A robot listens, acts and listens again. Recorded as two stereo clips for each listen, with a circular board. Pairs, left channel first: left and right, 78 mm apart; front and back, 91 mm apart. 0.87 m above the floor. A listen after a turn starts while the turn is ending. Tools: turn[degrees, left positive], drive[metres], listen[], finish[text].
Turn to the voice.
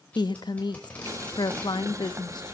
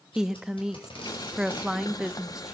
Thought: The woman speaking: 100° left.
Action: turn[100]
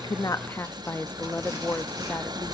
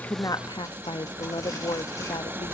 Thought: The woman speaking is now 30° left.
Action: turn[30]
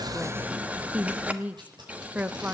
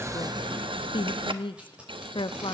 Thought: The woman speaking is now 20° right.
Action: turn[-20]
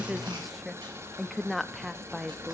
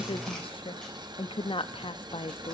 Action: finish[Facing the woman speaking, under 1 m away.]